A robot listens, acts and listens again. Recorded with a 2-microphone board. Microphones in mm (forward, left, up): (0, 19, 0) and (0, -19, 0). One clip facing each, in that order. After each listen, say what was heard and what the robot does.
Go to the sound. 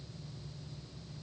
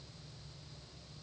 Keep listening.
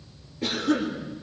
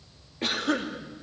The cough: about 45° right or 135° right. Turn 45° right.
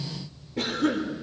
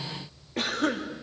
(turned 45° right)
So it is at 95° right. Turn 95° right.
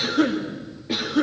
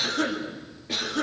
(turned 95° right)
The cough is now 10° left. Turn 10° left.
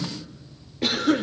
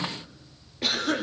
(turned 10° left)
Drive 1.0 m forward.
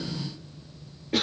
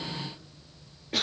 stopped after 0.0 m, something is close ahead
Something is in my way. I am facing the cough but have not reached it.